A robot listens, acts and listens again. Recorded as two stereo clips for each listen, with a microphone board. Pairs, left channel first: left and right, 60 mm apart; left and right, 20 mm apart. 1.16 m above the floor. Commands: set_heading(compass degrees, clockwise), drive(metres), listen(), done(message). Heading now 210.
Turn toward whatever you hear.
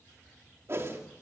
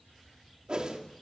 set_heading(260)
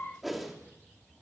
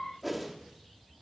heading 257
done("Facing the whoosh, 2 to 4 m away.")